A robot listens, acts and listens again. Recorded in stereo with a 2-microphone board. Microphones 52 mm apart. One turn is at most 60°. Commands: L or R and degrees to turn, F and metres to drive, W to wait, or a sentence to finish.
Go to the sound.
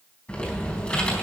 L25
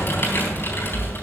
L60
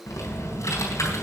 L60
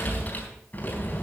L30
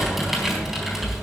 F1.0
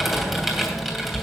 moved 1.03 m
R10
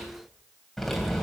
F1.0
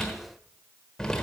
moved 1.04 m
L10
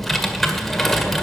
F1.0
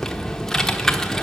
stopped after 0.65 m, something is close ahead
I am next to the typing on a keyboard.